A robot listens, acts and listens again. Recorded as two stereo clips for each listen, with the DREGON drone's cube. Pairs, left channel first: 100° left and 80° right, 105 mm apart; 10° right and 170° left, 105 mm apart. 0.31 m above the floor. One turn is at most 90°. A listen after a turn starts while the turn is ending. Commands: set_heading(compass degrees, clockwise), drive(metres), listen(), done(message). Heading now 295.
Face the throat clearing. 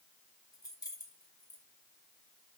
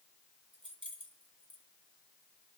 listen()
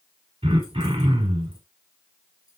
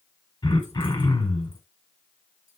set_heading(350)
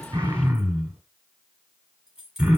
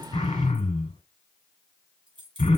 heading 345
done("Facing the throat clearing.")